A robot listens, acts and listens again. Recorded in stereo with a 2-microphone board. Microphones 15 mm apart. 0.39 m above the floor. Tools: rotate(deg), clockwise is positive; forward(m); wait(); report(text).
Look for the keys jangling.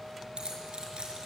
rotate(90)
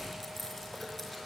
report("Found it: keys jangling, straight ahead.")